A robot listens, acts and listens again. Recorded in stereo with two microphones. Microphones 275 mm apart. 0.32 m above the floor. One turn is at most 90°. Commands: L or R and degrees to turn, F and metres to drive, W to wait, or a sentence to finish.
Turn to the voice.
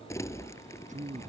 R30
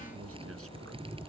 W
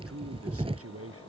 R90
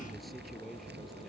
Facing the man speaking.